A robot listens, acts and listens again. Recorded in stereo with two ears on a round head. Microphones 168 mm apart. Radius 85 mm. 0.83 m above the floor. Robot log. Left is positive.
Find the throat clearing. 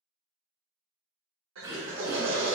note: The throat clearing: about 25° right or 155° right.
cmd yaw -25
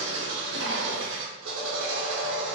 cmd idle
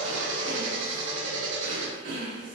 note: So it is at 130° right.
cmd yaw -130
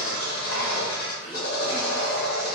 cmd idle
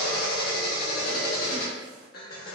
cmd idle
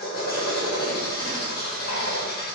end: Facing where the throat clearing came from. I can't hear it now.